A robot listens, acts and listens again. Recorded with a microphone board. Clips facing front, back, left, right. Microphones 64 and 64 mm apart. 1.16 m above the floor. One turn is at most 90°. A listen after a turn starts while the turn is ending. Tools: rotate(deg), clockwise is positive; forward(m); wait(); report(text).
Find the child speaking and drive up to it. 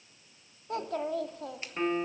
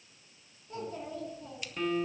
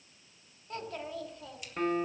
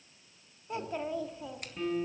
rotate(15)
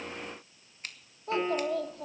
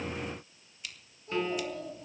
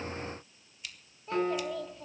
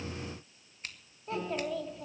forward(1.0)
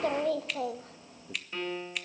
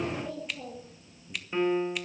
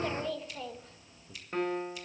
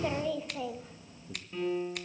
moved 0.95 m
rotate(10)
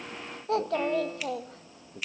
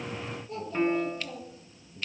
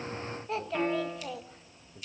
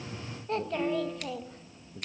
forward(1.0)
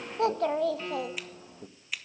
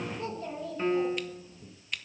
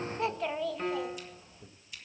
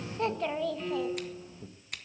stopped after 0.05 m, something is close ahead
report("I am next to the child speaking.")